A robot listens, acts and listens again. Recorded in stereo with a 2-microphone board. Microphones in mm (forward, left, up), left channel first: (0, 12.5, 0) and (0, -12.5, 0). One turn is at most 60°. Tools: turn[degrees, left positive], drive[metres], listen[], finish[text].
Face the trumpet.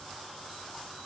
Action: listen[]
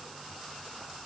Action: listen[]
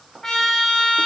Thought: The trumpet: about 20° left or 160° left.
Action: turn[20]
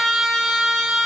Action: finish[Facing the trumpet, 1 to 2 m away.]